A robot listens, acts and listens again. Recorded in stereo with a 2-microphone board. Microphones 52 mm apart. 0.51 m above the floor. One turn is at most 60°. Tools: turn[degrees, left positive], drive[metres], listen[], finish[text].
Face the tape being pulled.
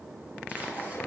Action: listen[]
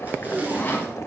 Thought: The tape being pulled: about 30° right or 150° right.
Action: turn[-30]
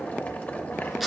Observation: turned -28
Action: finish[Found it: tape being pulled, straight ahead, 2 to 4 m away.]